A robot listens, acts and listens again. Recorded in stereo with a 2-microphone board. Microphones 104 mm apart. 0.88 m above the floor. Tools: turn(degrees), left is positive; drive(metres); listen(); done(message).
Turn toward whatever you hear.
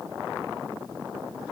listen()
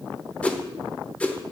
turn(degrees=30)
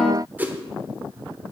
turn(degrees=-15)
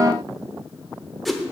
done("Found it: a whoosh, straight ahead.")